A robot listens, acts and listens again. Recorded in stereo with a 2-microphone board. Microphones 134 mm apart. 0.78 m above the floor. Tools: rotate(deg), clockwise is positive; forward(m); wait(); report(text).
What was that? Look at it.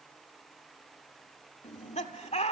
rotate(-55)
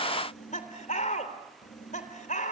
rotate(-75)
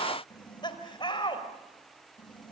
rotate(-40)
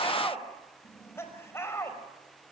rotate(-20)
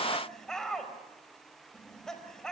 report("Found it: laughter, straight ahead.")